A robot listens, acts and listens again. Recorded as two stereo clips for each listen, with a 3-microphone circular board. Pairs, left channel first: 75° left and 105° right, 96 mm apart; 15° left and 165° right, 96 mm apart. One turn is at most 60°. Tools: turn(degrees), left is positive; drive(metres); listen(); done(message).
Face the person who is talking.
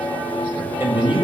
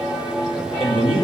turn(degrees=-60)
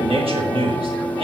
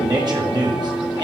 turn(degrees=-60)
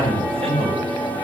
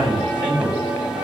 turn(degrees=-60)
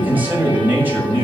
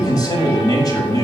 turn(degrees=-35)
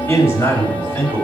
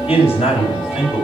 turn(degrees=10)
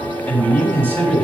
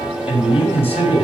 done("Facing the man speaking.")